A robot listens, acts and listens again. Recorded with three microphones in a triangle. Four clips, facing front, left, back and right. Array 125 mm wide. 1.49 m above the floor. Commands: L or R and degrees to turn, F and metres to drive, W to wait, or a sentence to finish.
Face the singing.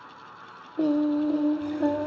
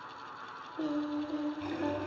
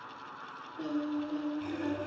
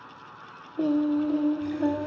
R25
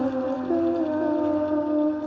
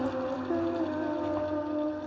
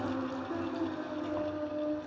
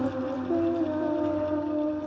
Facing the singing.